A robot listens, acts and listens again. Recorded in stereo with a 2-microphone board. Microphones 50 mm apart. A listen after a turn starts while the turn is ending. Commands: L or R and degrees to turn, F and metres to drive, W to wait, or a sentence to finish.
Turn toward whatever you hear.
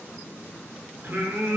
R50
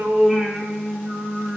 R30
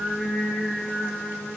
R20
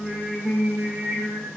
R25
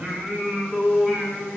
Facing the singing, 2 to 4 m away.